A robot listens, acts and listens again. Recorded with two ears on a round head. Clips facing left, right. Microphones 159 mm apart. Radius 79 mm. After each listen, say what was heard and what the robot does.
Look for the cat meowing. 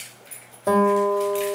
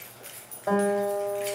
Keep listening.
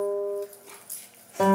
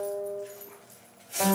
Keep listening.
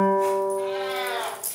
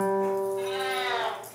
Turn 30° right.
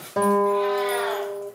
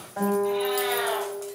Keep listening.
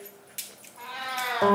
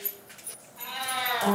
So it is at 140° right. Turn 140° right.
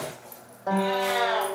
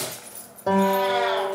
The cat meowing is now 10° left. Turn 10° left.
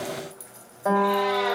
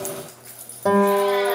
Keep listening.
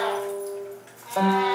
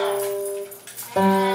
Keep listening.
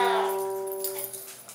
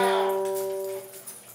Facing where the cat meowing came from. I can't hear it now.